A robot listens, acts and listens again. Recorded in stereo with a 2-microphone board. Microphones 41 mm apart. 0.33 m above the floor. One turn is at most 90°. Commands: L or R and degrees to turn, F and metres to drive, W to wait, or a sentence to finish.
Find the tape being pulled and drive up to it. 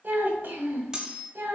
W
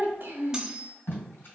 L60
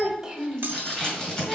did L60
L20
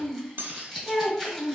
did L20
F1.0
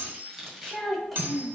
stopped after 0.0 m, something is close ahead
Something is in my way. I am facing the tape being pulled but have not reached it.